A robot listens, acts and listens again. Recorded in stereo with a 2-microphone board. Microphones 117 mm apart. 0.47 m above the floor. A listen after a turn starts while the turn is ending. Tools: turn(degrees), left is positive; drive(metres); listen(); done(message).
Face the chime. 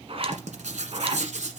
listen()
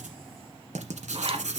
listen()
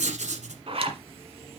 done("I can't make out a chime, only a zipper and writing.")